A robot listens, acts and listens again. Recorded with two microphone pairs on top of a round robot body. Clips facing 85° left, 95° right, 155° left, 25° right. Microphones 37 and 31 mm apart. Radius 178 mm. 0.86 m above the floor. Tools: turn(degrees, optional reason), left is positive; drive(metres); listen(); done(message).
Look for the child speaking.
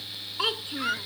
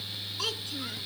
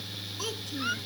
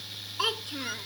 turn(degrees=25, reason="The child speaking: 25° left.")
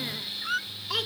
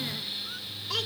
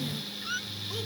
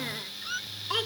listen()
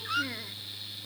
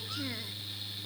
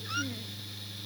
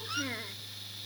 listen()
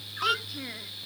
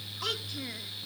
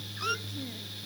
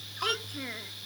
done("I heard a child speaking from this way, but can't make it out now.")